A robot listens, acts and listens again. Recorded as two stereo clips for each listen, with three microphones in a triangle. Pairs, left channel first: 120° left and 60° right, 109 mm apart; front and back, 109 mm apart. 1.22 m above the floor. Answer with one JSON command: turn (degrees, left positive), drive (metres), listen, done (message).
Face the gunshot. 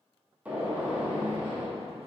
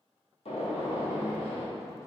{"turn": 15}
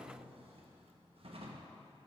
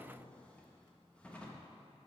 {"done": "Facing where the gunshot came from. I can't hear it now."}